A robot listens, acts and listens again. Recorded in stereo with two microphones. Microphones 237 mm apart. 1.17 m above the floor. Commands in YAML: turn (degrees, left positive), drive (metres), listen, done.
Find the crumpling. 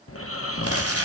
turn: -70
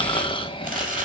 turn: -35
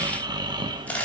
done: "Found it: crumpling, straight ahead."